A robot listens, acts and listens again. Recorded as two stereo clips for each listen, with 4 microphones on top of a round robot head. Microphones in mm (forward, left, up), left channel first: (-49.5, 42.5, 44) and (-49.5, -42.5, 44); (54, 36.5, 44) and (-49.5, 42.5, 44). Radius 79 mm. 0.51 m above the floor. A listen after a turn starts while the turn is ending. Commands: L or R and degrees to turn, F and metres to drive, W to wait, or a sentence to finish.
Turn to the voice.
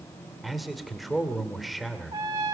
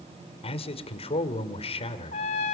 Found it: a man speaking, straight ahead.